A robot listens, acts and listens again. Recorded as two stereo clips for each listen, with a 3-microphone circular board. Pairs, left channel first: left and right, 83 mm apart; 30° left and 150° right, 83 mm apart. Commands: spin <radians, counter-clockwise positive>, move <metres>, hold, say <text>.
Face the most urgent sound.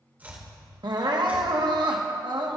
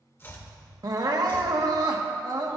spin -2.01
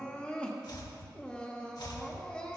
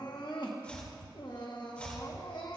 spin 0.26
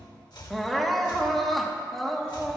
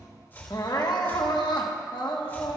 say Facing the crying.